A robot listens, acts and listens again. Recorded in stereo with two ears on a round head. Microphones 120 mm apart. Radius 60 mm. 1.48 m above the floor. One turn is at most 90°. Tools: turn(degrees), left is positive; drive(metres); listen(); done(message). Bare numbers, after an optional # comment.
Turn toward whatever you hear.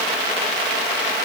listen()
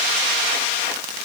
listen()
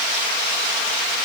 done("I can't make out anything to turn to.")